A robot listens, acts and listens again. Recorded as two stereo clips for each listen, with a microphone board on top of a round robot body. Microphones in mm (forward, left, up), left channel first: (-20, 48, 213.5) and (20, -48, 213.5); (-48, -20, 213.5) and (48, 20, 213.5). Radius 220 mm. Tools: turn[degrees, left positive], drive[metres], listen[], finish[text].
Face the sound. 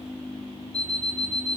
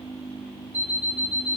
Thought: The alarm clock: 95° left.
Action: turn[95]
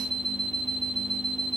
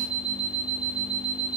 Thought: The alarm clock is now 25° left.
Action: turn[25]
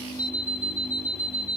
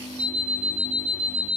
Thought: The alarm clock is now 10° left.
Action: turn[10]
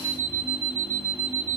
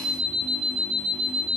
Action: finish[Facing the alarm clock.]